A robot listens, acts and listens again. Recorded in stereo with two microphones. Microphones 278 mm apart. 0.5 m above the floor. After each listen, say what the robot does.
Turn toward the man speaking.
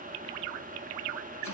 Keep listening.
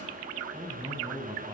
Turn 30° right.
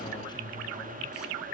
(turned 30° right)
Turn 15° left.
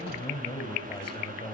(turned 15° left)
Turn 15° left.
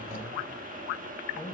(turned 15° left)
Facing the man speaking, 2 to 4 m away.